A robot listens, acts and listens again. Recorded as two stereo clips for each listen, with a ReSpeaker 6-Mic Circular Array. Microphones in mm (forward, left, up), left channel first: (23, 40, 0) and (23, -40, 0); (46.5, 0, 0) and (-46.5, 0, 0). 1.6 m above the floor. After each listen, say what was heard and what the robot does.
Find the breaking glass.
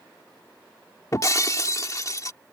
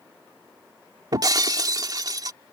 The breaking glass: 135° left. Turn 135° left.
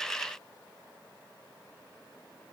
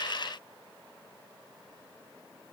Facing where the breaking glass came from. I can't hear it now.